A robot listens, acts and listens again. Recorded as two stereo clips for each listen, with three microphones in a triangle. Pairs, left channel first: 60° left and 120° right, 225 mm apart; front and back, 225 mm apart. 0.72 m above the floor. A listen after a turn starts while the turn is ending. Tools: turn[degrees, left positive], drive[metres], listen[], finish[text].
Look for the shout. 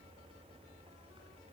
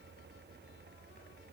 Action: listen[]
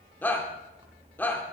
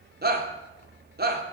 Thought: The shout: 140° left.
Action: turn[140]
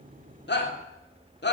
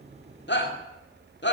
Thought: The shout is now 30° left.
Action: turn[30]
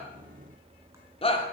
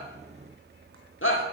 Action: finish[Facing the shout, 2 to 4 m away.]